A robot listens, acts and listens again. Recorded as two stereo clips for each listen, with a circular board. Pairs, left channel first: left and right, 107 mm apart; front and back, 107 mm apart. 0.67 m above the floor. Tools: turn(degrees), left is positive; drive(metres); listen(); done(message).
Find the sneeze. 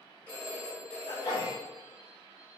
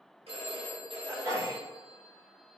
turn(degrees=130)
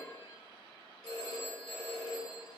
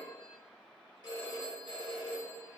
done("I heard a sneeze from this way, but can't make it out now.")